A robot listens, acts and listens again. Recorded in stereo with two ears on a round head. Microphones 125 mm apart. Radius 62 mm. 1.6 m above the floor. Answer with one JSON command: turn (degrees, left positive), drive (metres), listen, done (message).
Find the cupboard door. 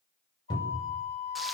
{"turn": 30}
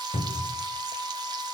{"turn": 120}
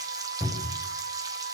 {"done": "Facing the cupboard door, over 4 m away."}